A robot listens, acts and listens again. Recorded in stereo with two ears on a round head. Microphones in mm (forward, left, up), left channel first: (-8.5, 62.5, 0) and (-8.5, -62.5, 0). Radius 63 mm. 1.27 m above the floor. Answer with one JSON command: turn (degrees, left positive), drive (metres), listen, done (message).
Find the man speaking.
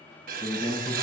{"turn": 30}
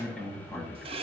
{"done": "Found it: a man speaking, straight ahead."}